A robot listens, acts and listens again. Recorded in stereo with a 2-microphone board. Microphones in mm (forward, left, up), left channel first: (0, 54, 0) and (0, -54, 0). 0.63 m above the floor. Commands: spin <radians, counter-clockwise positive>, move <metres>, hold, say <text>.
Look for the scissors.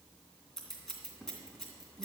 spin 0.52
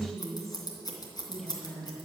spin 2.44
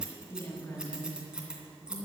spin -0.17
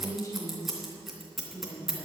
say Facing the scissors.